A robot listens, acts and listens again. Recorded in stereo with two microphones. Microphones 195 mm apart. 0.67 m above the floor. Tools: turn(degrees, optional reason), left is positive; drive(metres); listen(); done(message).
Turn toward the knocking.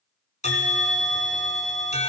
listen()
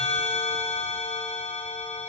listen()
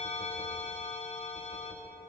done("I can't make out knocking to turn to.")